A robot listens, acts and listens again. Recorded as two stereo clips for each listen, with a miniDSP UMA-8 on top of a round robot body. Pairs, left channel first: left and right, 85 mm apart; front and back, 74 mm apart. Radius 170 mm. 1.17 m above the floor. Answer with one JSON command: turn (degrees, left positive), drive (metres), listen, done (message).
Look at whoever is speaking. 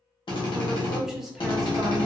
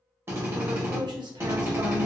{"turn": -175}
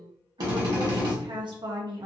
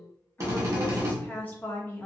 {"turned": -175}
{"turn": -65}
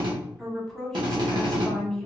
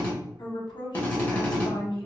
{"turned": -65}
{"done": "Facing the woman speaking."}